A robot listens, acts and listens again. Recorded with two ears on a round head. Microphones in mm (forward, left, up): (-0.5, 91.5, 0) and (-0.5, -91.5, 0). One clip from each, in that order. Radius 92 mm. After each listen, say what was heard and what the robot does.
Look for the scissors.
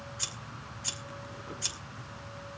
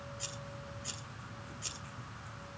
The scissors: about 45° left or 135° left. Turn 45° left.
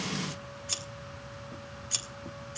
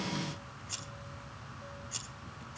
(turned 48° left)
So it is at 85° left. Turn 85° left.
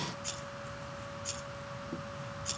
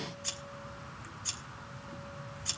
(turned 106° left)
The scissors is now 20° right. Turn 20° right.
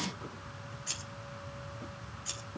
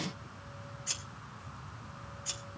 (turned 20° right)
Facing the scissors.